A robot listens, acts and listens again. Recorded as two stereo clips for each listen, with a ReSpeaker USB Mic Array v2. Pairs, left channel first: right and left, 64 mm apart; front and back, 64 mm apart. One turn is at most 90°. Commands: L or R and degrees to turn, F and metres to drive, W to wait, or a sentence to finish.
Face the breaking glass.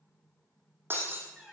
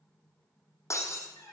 L40
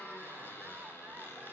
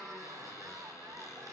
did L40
I heard breaking glass from this way, but can't make it out now.